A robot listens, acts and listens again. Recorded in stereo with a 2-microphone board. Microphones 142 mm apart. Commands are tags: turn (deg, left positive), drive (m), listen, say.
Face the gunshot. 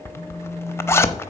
<listen/>
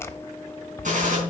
<turn deg="-60"/>
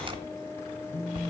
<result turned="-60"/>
<listen/>
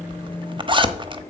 <say>I heard a gunshot, but can't make it out now. It was about straight ahead or 60° right.</say>